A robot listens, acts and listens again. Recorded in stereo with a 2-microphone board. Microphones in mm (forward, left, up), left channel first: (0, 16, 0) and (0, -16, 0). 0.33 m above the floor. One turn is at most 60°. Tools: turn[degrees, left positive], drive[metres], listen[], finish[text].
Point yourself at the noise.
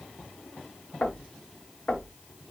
Thought: The knocking: about 55° left or 125° left.
Action: turn[55]
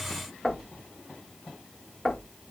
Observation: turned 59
Thought: So it is at 20° left.
Action: turn[20]
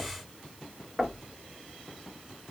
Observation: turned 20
Action: finish[Facing the knocking.]